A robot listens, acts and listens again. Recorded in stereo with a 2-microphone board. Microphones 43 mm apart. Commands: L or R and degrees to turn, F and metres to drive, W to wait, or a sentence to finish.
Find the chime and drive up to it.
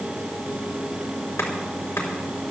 W
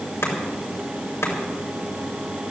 W
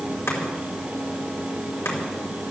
I can't make out a chime to turn to.